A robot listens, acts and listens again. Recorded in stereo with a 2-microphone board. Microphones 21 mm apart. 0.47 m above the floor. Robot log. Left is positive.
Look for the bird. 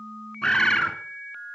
note: The bird: about 35° left or 145° left.
cmd yaw +35
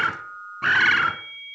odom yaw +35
end: Found it: a bird, straight ahead.